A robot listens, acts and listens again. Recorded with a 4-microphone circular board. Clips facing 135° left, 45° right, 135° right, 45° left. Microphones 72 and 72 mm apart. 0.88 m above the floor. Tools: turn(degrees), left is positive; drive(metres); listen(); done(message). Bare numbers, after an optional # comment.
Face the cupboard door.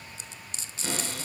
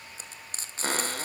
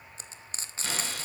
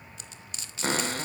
done("Found it: a cupboard door, straight ahead.")